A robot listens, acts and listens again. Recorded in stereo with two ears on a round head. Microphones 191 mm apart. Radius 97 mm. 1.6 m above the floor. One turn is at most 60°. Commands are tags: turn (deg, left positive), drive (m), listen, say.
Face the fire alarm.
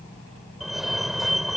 <turn deg="30"/>
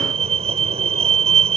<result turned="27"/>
<turn deg="-30"/>
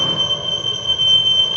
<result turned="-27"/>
<say>Facing the fire alarm.</say>